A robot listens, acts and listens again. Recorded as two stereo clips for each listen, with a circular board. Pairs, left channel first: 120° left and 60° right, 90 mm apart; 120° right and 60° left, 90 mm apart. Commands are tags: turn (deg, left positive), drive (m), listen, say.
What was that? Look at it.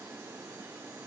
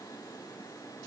<listen/>
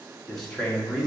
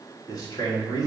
<turn deg="-150"/>
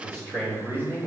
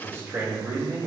<say>Found it: a man speaking, straight ahead, 2 to 4 m away.</say>